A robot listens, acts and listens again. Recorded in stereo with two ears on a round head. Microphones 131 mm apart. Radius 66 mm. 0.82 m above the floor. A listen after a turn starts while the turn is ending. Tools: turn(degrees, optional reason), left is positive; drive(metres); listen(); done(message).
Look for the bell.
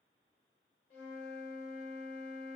listen()
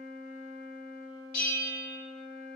turn(degrees=65, reason="The bell: about 65° left or 115° left.")
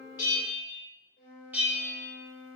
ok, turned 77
turn(degrees=-10, reason="So it is at 10° right.")
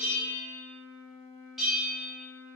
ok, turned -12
done("Found it: a bell, straight ahead, 1 to 2 m away.")